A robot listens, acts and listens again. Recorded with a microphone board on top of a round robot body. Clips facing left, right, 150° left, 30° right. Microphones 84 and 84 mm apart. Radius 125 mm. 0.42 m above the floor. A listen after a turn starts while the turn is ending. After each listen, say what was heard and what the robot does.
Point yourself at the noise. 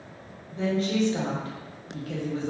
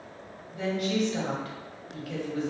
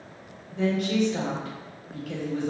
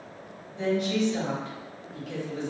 The woman speaking: 140° left. Turn 140° left.
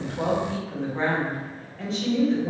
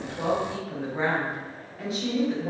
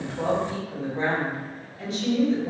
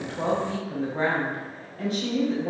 The woman speaking is now 10° right. Turn 10° right.
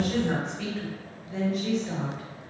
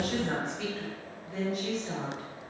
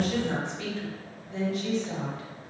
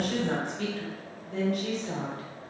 Facing the woman speaking.